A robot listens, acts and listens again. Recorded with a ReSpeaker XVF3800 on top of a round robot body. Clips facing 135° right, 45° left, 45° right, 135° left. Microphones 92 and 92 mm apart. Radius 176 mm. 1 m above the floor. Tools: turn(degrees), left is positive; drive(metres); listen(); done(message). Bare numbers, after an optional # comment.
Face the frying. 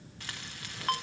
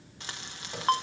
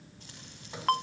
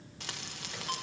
# The frying: 115° left.
turn(115)
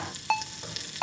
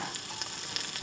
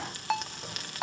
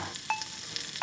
done("Facing the frying, 1 to 2 m away.")